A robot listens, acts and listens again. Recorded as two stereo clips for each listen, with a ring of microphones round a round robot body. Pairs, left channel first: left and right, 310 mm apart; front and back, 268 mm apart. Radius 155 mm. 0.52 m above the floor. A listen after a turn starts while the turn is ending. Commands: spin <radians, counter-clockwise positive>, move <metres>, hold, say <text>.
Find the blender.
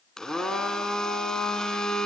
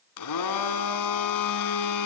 say Facing the blender.